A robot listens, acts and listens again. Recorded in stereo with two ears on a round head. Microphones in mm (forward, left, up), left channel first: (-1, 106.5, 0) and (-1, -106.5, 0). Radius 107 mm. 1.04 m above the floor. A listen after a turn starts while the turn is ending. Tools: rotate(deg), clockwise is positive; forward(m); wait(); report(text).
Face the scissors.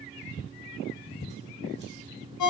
wait()
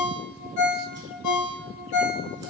wait()
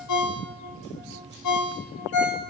report("I can't make out scissors to turn to.")